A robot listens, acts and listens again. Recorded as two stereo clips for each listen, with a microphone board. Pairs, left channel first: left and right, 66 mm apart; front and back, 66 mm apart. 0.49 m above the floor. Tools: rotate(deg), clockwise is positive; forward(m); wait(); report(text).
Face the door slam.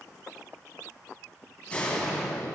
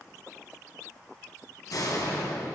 rotate(-20)
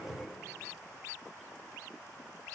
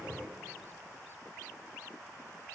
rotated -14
report("I heard a door slam from this way, but can't make it out now.")